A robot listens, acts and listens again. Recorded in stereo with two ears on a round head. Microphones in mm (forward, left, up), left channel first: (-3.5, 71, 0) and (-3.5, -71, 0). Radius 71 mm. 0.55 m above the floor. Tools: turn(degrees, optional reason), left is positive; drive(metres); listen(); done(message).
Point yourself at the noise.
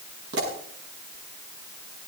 turn(degrees=-75, reason="The pop: about 75° right or 105° right.")
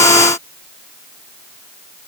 listen()
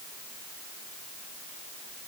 done("I heard a pop, but can't make it out now. It was about straight ahead or 30° right.")